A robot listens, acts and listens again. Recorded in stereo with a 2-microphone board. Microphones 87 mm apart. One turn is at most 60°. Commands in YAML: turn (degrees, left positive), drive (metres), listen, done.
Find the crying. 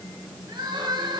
turn: -60
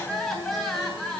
done: "Facing the crying."